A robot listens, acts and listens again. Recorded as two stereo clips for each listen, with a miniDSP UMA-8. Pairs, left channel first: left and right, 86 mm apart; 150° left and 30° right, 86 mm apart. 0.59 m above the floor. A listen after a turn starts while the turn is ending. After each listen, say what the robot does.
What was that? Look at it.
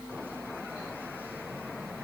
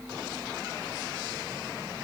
Keep listening.
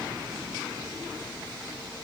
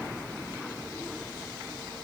Keep listening.
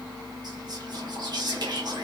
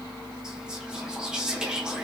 Turn 110° right.
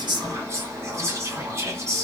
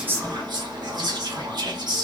Turn 40° right.
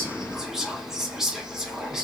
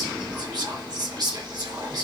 Facing the whispering, 1 to 2 m away.